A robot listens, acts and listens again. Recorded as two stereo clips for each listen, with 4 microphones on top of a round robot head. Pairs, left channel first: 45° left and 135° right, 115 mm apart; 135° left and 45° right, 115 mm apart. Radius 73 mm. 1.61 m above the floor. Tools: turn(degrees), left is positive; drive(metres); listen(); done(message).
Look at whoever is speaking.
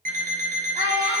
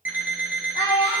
turn(degrees=-165)
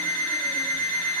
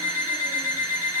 listen()
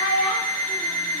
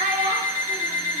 done("Facing the child speaking.")